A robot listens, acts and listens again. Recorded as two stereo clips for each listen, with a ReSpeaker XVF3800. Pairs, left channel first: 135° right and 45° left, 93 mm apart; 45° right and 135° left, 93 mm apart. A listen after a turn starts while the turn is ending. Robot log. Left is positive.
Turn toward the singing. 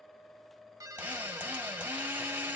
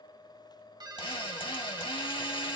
cmd idle
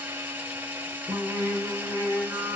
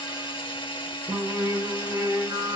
note: The singing: 105° left.
cmd yaw +105
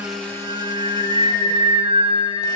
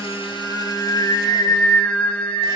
note: The singing is now 30° left.
cmd yaw +30
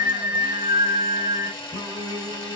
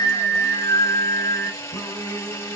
note: The singing is now 15° left.
cmd yaw +15
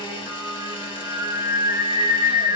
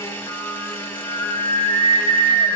end: Facing the singing.